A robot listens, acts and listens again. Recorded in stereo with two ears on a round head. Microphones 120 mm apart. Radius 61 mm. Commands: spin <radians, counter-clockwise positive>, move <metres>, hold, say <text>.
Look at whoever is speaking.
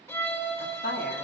spin 1.57
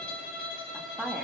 say Found it: a woman speaking, straight ahead, 2 to 4 m away.